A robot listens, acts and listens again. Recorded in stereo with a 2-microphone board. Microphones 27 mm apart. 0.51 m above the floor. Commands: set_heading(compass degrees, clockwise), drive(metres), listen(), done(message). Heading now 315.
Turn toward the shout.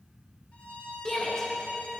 set_heading(295)
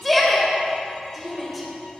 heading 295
done("Found it: a shout, straight ahead, 2 to 4 m away.")